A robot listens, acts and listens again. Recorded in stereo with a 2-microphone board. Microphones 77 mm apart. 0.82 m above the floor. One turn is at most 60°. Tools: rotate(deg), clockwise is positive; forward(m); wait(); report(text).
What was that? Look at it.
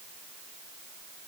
wait()
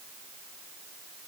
wait()
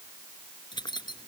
rotate(-60)
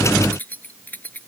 rotate(-25)
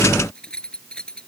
rotate(-10)
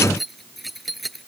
report("Found it: keys jangling, straight ahead.")